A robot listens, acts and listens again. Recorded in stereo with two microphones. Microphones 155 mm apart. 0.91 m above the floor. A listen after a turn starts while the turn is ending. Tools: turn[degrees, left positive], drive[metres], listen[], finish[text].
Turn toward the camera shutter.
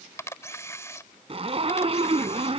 Thought: The camera shutter: about 20° left or 160° left.
Action: turn[20]
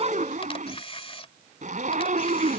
Thought: So it is at 140° left.
Action: turn[140]
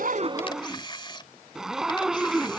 Thought: The camera shutter is now 30° left.
Action: turn[30]
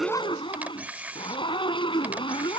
Thought: The camera shutter is now 10° right.
Action: turn[-10]
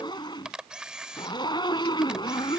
Action: finish[Found it: a camera shutter, straight ahead.]